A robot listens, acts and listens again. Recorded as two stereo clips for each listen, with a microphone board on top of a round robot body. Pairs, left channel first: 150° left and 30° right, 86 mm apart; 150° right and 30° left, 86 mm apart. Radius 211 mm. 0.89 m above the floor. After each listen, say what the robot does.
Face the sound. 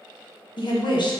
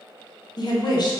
Turn 175° left.
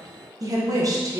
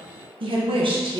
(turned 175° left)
Turn 15° left.
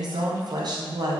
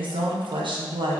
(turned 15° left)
Found it: a woman speaking, straight ahead.